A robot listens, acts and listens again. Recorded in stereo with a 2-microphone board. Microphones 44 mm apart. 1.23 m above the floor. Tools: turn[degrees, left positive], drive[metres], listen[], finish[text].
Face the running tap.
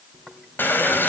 Thought: The running tap: about 50° left or 130° left.
Action: turn[50]
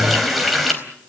Action: finish[Found it: a running tap, straight ahead.]